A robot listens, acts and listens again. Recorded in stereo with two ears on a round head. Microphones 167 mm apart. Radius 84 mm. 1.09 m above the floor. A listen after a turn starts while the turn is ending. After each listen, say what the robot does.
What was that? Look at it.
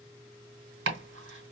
Turn 90° right.
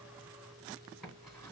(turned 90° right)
Keep listening.
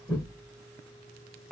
Found it: chopping, straight ahead, 2 to 4 m away.